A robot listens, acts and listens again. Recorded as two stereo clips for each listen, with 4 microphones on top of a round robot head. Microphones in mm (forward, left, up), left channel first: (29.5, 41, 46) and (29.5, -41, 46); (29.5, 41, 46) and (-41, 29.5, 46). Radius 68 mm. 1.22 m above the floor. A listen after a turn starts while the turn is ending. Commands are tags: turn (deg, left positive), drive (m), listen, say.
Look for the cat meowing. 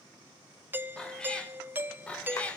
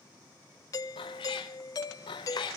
<turn deg="15"/>
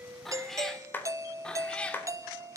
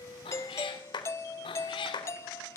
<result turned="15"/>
<turn deg="10"/>
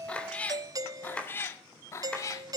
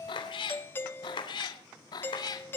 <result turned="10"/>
<turn deg="40"/>
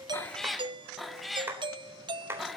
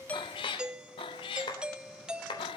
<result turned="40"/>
<say>Found it: a cat meowing, straight ahead.</say>